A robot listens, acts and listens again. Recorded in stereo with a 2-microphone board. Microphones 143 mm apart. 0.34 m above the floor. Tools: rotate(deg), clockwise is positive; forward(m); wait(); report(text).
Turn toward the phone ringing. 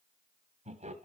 wait()
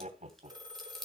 rotate(25)
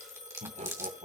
rotate(130)
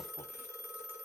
rotate(-15)
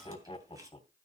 wait()
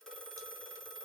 report("Facing the phone ringing.")